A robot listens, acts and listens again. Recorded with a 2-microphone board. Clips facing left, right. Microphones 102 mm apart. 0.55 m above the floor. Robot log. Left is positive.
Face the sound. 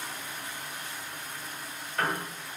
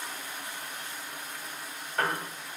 note: The piano: about 35° right or 145° right.
cmd yaw -35
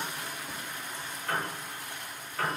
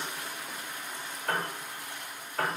note: So it is at 110° right.
cmd yaw -110
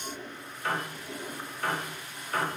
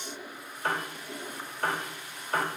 note: The piano is now 40° right.
cmd yaw -40
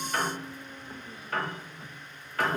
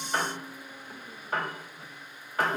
note: The piano is now 25° right.
cmd yaw -25
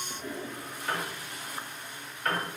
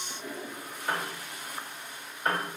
note: The piano is now 20° right.
cmd yaw -20
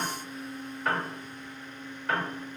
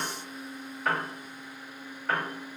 end: Facing the piano.